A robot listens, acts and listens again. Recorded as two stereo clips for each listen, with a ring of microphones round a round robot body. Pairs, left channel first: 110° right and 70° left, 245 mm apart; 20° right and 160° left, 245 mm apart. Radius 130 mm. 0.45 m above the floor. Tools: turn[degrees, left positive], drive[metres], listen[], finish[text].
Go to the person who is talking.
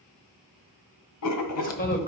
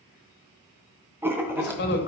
Thought: The man speaking: 60° right.
Action: turn[-60]
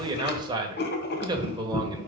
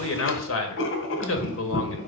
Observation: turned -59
Action: drive[1.0]
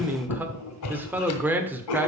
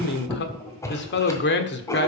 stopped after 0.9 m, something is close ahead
Thought: The man speaking is now 15° right.
Action: turn[-15]
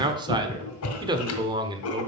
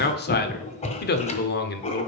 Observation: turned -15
Action: finish[I am next to the man speaking.]